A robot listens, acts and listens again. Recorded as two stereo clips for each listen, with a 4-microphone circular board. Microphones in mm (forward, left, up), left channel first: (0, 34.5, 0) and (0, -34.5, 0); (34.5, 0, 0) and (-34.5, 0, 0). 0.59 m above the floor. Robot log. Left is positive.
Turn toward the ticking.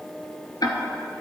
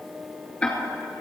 note: The ticking: 75° left.
cmd yaw +75
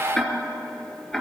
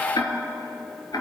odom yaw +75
note: The ticking is now 10° left.
cmd yaw +10
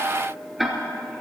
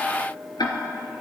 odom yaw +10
end: Facing the ticking, 1 to 2 m away.